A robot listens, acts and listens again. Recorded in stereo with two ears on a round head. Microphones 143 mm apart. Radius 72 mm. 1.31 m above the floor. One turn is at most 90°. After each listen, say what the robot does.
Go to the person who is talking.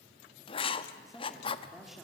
Turn 30° left.
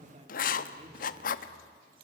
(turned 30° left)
Turn 30° right.
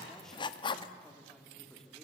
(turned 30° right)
Drive 1.0 m forward.
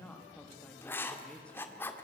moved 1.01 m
Turn 10° left.
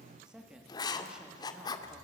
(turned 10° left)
Drive 1.0 m forward.
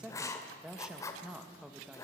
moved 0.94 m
Drive 1.0 m forward.
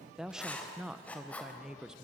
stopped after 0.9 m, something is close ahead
I am next to the woman speaking.